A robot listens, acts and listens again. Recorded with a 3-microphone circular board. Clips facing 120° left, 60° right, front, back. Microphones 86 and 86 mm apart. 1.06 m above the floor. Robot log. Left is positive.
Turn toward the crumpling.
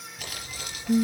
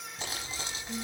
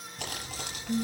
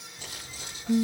end: Found it: crumpling, straight ahead, over 4 m away.